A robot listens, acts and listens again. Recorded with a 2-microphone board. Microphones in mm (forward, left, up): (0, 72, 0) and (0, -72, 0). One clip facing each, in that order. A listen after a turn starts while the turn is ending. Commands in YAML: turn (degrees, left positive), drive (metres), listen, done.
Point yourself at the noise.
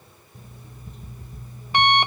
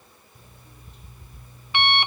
turn: 40
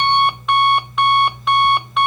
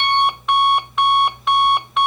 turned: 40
done: "Facing the alarm clock."